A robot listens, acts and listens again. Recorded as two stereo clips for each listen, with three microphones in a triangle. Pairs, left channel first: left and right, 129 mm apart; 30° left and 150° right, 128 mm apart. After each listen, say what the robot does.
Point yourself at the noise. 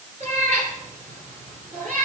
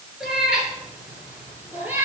Turn 75° right.
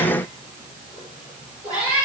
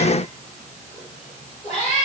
Turn 10° right.
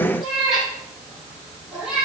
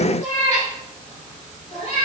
Facing the cat meowing, over 4 m away.